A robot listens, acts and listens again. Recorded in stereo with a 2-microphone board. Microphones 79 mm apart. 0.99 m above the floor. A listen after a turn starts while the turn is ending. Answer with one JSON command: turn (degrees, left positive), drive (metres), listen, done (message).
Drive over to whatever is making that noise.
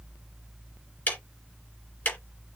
{"turn": 25}
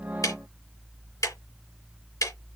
{"turn": 130}
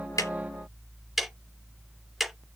{"drive": 1.0}
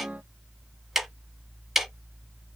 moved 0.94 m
{"drive": 1.0}
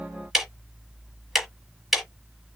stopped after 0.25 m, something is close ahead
{"done": "Arrived at the ticking, straight ahead."}